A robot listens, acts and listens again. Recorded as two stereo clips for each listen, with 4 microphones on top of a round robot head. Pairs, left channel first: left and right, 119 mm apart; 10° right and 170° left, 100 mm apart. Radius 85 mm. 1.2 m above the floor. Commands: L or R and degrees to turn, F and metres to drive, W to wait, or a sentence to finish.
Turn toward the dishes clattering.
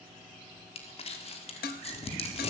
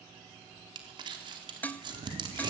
L65
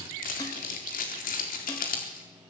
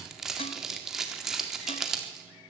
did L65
W
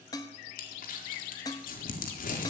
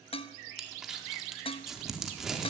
L20
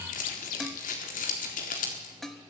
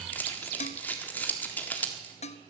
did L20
Found it: dishes clattering, straight ahead, 1 to 2 m away.